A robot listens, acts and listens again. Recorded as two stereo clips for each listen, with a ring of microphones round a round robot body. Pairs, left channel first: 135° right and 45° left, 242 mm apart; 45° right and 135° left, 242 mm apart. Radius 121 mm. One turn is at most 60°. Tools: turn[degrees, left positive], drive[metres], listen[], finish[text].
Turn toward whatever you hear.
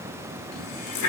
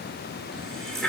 Thought: The running tap: 135° right.
Action: turn[-60]
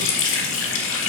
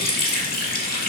Thought: The running tap is now 100° right.
Action: turn[-60]
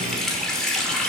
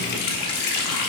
Thought: The running tap is now 45° right.
Action: turn[-45]
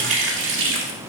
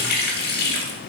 Action: finish[Found it: a running tap, straight ahead.]